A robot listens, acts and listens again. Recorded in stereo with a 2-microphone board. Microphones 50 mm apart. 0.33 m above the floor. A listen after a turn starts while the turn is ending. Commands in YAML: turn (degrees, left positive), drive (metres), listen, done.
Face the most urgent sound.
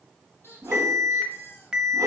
turn: -30
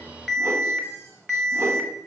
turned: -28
turn: 10
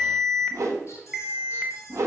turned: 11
done: "Found it: an alarm, straight ahead, under 1 m away."